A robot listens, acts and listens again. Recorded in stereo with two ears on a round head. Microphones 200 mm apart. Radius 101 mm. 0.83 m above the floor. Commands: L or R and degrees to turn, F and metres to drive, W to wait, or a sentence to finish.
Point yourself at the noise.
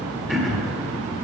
L30
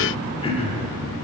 L155
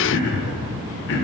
L55
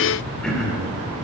Found it: throat clearing, straight ahead, 1 to 2 m away.